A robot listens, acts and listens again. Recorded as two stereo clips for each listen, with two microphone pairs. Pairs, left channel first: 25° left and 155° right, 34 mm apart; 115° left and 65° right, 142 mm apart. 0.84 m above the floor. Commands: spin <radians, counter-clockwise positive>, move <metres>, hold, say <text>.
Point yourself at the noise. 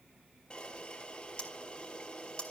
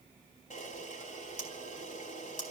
spin 1.48
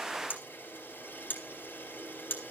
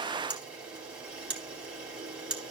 spin 0.26
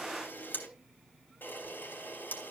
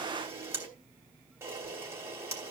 say Found it: a camera shutter, straight ahead, 2 to 4 m away.